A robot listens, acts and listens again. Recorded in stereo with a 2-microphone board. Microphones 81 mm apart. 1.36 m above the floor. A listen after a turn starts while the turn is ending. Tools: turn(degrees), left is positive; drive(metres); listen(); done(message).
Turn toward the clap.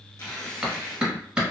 turn(degrees=-30)
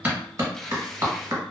turn(degrees=-135)
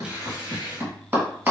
turn(degrees=-30)
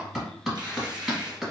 done("Found it: a clap, straight ahead, 1 to 2 m away.")